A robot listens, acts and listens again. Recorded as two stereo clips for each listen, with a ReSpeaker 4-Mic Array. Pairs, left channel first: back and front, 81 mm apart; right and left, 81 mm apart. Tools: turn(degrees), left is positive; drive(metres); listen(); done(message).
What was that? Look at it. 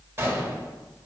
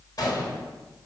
turn(degrees=-55)
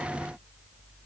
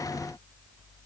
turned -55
done("Facing where the gunshot came from. I can't hear it now.")